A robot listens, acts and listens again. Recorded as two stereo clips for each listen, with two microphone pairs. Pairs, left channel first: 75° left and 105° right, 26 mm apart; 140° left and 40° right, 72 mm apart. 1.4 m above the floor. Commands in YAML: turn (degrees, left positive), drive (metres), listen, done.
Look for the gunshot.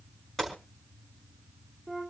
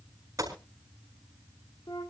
done: "Facing the gunshot."